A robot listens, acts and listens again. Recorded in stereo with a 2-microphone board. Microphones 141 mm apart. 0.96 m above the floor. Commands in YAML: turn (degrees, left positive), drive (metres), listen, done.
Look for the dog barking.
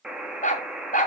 turn: 70
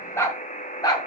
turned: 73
turn: 30
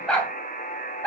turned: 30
turn: 10
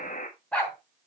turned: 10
turn: 10
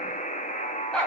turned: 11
done: "Facing the dog barking, 2 to 4 m away."